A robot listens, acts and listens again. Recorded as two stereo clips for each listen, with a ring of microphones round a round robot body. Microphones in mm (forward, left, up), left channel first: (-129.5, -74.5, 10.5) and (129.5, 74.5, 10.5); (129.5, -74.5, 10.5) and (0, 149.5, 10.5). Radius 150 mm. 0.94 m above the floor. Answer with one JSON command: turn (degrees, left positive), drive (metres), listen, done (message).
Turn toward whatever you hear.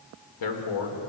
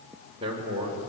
{"turn": -170}
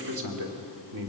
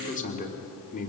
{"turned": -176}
{"done": "Found it: a man speaking, straight ahead, 2 to 4 m away."}